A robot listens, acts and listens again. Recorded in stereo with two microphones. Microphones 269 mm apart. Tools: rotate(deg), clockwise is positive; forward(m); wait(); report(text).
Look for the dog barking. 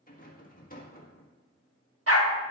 rotate(55)
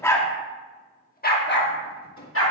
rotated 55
rotate(-55)
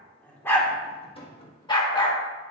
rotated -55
rotate(-15)
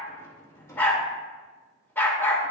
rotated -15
rotate(-10)
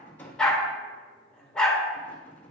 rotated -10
report("Facing the dog barking.")